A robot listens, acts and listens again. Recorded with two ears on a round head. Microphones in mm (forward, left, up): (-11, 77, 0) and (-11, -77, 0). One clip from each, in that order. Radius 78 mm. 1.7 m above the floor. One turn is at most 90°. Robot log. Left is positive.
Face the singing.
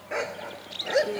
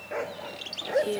note: The singing: about 65° right or 115° right.
cmd yaw -65
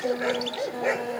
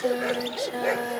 note: So it is at 50° right.
cmd yaw -50
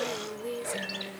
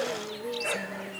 note: The singing is now 10° left.
cmd yaw +10
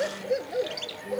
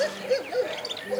cmd idle
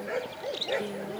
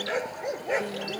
cmd idle
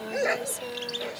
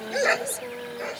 end: Facing the singing.